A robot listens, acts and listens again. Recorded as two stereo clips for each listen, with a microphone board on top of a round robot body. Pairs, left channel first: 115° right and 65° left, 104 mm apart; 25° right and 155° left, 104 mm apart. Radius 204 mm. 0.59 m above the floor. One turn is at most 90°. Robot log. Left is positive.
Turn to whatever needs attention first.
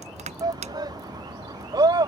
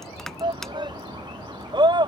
note: The shout: 115° left.
cmd yaw +90
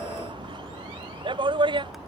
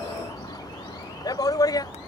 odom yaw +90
note: The shout is now 30° left.
cmd yaw +30
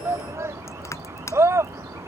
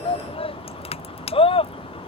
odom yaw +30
end: Facing the shout.